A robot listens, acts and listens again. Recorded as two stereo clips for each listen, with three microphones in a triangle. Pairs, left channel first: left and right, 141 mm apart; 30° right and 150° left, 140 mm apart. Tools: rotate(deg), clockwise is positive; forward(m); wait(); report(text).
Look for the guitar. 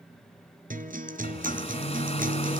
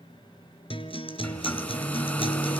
rotate(80)
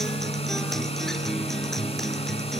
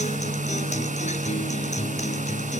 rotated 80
report("Facing the guitar, 2 to 4 m away.")